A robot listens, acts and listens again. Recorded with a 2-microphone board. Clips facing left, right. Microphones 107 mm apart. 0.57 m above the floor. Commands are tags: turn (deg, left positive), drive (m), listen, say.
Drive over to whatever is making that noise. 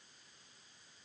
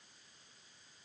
<listen/>
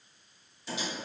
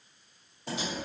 <turn deg="-55"/>
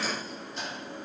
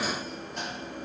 <turn deg="-65"/>
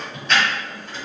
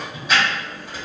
<turn deg="-15"/>
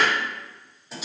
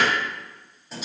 <drive m="1.0"/>
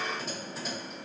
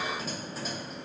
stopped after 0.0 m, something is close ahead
<say>Something is in my way. I am facing the typing on a keyboard but have not reached it.</say>